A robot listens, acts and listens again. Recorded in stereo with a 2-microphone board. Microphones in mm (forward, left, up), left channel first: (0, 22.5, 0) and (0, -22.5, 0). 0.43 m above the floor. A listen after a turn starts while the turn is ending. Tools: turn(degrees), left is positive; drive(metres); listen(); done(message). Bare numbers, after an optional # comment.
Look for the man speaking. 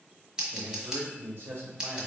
# The man speaking: about 55° right or 125° right.
turn(-55)
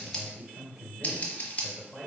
done("Found it: a man speaking, straight ahead.")